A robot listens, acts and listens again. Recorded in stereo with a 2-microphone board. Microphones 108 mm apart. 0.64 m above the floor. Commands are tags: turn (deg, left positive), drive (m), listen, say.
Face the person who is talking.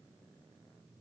<listen/>
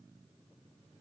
<listen/>
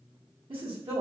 <turn deg="-50"/>
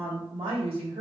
<turn deg="-70"/>
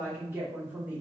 <turn deg="-20"/>
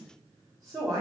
<say>Facing the woman speaking, 1 to 2 m away.</say>